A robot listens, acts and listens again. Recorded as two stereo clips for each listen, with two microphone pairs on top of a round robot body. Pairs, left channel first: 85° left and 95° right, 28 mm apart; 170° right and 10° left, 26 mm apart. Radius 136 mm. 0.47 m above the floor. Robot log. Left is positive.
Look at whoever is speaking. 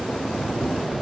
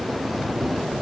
cmd idle
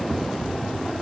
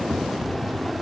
cmd idle
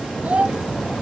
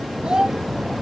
note: The child speaking: 55° right.
cmd yaw -55
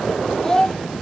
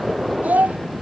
note: The child speaking is now 15° left.
cmd yaw +15
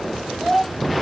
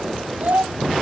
end: Facing the child speaking.